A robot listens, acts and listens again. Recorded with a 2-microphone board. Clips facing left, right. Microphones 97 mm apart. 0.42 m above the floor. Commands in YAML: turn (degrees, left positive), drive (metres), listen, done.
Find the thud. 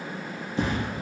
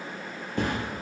turn: -55
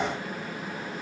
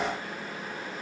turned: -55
listen: true
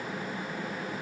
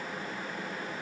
done: "I heard a thud, but can't make it out now. It was about straight ahead or 70° right."